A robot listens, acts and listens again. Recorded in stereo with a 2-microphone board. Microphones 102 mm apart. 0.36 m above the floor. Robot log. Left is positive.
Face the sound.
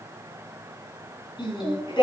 note: The singing: about 50° left or 130° left.
cmd yaw +50
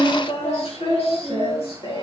note: So it is at 75° left.
cmd yaw +75
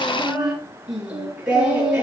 note: The singing is now 10° right.
cmd yaw -10
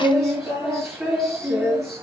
end: Facing the singing, over 4 m away.